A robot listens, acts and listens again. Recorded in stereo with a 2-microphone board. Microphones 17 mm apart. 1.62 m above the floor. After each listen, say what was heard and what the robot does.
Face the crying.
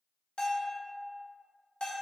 Keep listening.
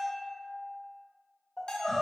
The crying: about 30° left or 150° left. Turn 30° left.
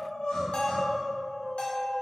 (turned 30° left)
So it is at 120° left. Turn 120° left.
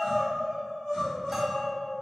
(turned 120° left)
The crying is now 15° left. Turn 15° left.
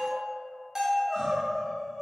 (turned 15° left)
Facing the crying.